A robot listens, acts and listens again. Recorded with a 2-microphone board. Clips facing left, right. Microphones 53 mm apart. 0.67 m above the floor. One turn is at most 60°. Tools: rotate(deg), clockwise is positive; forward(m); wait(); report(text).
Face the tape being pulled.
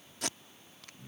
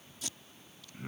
rotate(-60)
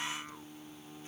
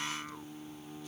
wait()
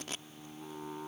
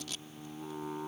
rotate(-40)
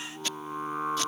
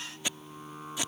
rotate(20)
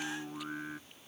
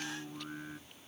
wait()
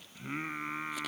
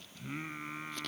wait()
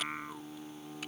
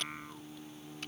report("Facing where the tape being pulled came from. I can't hear it now.")